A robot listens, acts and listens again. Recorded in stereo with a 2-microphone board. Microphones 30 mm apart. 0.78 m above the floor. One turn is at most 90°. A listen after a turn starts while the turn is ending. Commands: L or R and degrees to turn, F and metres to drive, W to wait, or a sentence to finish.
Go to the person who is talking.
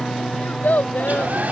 L75
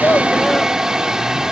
W
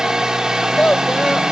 L30
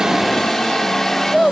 F1.0
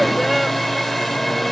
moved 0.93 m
W
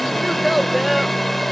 F1.0
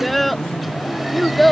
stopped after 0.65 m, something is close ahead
I am next to the child speaking.